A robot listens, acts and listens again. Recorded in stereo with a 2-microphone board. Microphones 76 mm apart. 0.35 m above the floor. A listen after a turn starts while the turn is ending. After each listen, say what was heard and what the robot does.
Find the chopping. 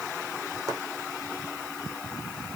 Keep listening.
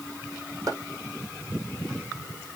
The chopping: about 50° right or 130° right. Turn 50° right.
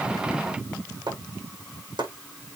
So it is at 85° right. Turn 85° right.
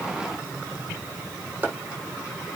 The chopping is now 25° right. Turn 25° right.
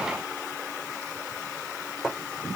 The chopping is now 10° right. Turn 10° right.
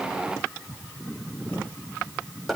Facing the chopping.